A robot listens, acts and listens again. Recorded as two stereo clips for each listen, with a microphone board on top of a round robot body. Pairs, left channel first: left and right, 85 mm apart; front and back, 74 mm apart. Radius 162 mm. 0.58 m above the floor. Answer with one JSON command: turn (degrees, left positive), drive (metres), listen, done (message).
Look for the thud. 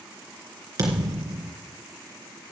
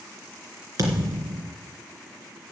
{"turn": -140}
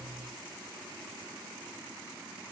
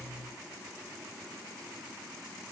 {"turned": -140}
{"done": "I heard a thud from this way, but can't make it out now."}